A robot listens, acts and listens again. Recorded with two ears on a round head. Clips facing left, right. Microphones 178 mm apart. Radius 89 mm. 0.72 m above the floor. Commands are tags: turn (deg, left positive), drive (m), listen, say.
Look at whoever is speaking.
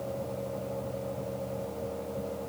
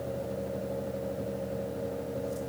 <listen/>
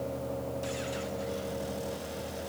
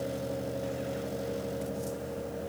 <listen/>
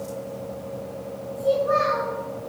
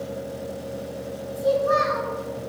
<turn deg="-50"/>
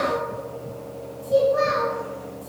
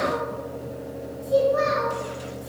<say>Found it: a child speaking, straight ahead, 2 to 4 m away.</say>